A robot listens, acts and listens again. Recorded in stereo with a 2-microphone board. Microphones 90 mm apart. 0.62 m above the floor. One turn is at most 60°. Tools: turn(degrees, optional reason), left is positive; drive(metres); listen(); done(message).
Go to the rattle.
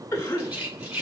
turn(degrees=-30)
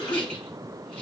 listen()
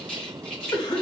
turn(degrees=15, reason="So it is at 15° left.")
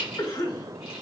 drive(metres=1.0)
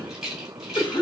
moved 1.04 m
drive(metres=1.0)
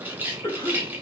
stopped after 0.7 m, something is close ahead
turn(degrees=-20, reason="The rattle is now 20° right.")
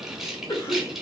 done("I am next to the rattle.")